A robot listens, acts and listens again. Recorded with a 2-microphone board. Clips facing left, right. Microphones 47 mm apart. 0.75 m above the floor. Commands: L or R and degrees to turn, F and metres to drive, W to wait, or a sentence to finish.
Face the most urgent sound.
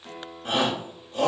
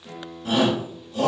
L35
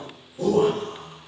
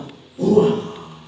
Found it: a shout, straight ahead.